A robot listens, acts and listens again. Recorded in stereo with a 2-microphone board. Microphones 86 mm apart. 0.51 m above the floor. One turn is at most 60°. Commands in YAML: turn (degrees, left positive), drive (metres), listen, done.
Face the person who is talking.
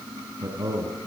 turn: -40
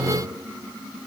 listen: true
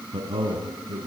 turn: -60
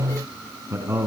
turn: -30
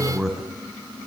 done: "Found it: a man speaking, straight ahead, 2 to 4 m away."